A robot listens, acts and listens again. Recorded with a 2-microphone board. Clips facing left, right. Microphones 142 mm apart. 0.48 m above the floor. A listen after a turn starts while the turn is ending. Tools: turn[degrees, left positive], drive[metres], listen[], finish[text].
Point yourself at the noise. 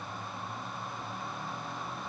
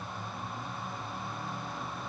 Action: listen[]
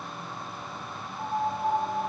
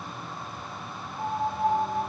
Thought: The piano: about 20° right or 160° right.
Action: turn[-20]
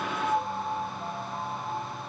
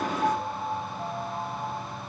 Thought: So it is at 140° right.
Action: turn[-140]
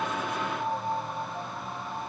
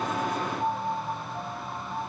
Action: finish[Facing the piano, 2 to 4 m away.]